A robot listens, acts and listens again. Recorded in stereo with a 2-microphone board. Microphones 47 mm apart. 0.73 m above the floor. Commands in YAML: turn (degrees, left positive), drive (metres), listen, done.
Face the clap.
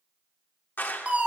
turn: 45
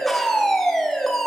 listen: true
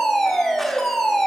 listen: true
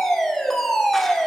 done: "I heard a clap, but can't make it out now. It was about straight ahead or 90° left."